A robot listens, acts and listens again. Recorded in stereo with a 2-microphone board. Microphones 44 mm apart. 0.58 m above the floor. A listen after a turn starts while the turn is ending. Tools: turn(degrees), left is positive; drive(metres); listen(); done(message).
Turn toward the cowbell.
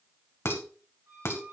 listen()
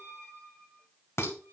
listen()
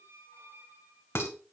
done("I can't make out a cowbell to turn to.")